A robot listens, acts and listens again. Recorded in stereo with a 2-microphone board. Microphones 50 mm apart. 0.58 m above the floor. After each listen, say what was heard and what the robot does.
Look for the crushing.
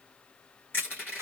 The crushing: about 40° left or 140° left. Turn 40° left.
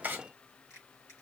Keep listening.
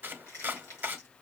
So it is at 100° left. Turn 100° left.
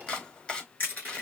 The crushing is now 35° left. Turn 35° left.
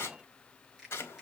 Keep listening.
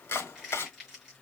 Found it: crushing, straight ahead, over 4 m away.